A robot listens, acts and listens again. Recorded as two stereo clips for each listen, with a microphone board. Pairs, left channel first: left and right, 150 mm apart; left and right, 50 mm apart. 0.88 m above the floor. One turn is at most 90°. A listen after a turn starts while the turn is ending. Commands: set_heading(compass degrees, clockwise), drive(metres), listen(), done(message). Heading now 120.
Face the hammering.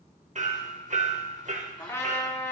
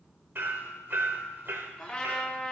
set_heading(175)
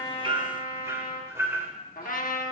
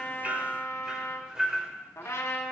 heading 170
set_heading(190)
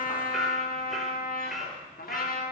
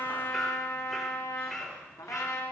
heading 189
done("Facing the hammering, under 1 m away.")